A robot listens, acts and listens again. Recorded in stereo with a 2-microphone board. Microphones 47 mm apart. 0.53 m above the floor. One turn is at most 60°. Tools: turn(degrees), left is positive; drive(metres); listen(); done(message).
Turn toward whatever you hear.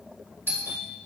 turn(degrees=-50)
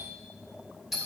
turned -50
done("Found it: a doorbell, straight ahead.")